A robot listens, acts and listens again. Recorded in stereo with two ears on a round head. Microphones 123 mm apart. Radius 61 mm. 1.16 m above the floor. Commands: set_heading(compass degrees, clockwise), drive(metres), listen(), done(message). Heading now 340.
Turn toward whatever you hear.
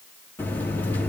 set_heading(310)
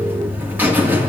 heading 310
set_heading(325)
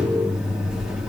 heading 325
done("Facing the buzzer.")